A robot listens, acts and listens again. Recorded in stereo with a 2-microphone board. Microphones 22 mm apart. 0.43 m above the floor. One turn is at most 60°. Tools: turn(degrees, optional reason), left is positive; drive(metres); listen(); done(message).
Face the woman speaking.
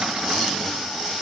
listen()
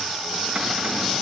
listen()
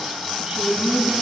turn(degrees=-35, reason="The woman speaking: about 35° right or 145° right.")
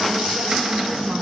turn(degrees=-60, reason="So it is at 110° right.")
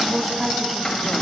turn(degrees=-15, reason="The woman speaking is now 15° right.")
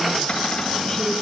listen()
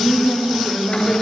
turn(degrees=10, reason="The woman speaking is now 10° left.")
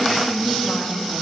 done("Found it: a woman speaking, straight ahead, 2 to 4 m away.")